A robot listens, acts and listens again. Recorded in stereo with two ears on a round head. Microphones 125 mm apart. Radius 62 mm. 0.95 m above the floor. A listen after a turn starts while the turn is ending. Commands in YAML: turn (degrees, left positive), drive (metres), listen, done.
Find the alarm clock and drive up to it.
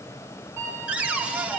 turn: -20
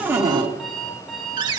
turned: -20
drive: 1.0
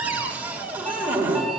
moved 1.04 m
listen: true
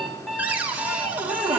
drive: 1.0
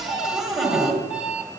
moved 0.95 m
turn: -10
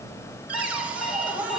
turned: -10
drive: 1.0
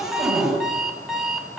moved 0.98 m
drive: 1.0
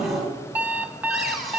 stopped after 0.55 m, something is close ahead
turn: -10
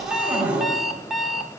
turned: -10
done: "Arrived at the alarm clock, straight ahead."